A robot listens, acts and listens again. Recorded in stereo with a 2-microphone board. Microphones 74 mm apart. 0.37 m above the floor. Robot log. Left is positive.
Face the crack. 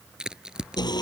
cmd yaw -30
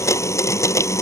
cmd idle
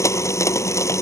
end: I heard a crack, but can't make it out now. It was about 20° left or 140° right.